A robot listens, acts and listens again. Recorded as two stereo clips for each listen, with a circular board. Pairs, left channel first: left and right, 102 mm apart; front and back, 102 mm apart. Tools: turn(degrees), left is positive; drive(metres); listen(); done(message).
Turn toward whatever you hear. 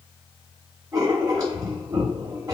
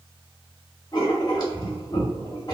turn(degrees=-40)
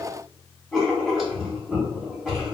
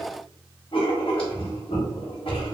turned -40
done("Facing the writing.")